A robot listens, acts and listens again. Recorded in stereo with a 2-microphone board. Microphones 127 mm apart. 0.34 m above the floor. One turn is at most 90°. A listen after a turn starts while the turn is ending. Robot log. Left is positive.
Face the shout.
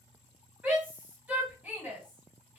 cmd yaw -30
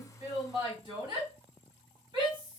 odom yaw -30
note: So it is at 135° right.
cmd yaw -90
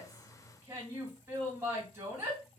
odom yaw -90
note: The shout is now 25° right.
cmd yaw -25
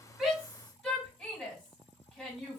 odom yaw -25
note: The shout is now 10° left.
cmd yaw +10
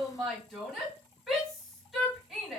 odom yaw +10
end: Facing the shout.